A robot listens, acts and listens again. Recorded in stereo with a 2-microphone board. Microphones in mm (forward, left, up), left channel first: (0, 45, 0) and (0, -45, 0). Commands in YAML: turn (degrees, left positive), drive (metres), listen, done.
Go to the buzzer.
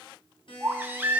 turn: 65
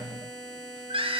drive: 1.0
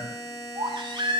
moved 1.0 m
drive: 1.0
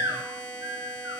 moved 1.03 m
turn: 10
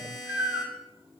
drive: 1.0
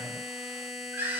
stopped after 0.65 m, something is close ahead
done: "I am next to the buzzer."